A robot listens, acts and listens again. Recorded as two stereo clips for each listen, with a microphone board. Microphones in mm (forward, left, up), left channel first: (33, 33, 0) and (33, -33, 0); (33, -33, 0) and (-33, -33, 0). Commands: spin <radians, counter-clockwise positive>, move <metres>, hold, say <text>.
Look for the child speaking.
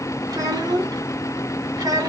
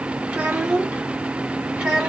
spin -1.75
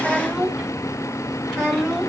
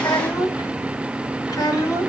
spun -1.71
say Found it: a child speaking, straight ahead.